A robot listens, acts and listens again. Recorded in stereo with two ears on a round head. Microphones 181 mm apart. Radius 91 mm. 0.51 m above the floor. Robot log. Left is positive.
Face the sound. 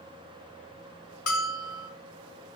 note: The bell: about 75° left or 105° left.
cmd yaw +75
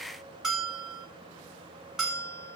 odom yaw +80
end: Facing the bell, 1 to 2 m away.